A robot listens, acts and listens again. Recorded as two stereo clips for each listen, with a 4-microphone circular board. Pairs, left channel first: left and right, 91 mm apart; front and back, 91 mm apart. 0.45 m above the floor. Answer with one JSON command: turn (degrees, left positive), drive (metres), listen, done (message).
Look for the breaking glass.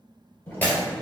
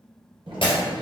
{"turn": 15}
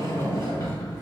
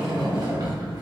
{"done": "I heard breaking glass from this way, but can't make it out now."}